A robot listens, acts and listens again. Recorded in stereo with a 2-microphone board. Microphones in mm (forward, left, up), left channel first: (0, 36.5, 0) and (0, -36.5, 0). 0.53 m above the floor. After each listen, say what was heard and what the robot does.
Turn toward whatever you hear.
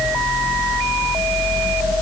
Keep listening.
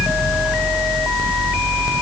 Keep listening.
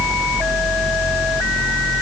I can't make out anything to turn to.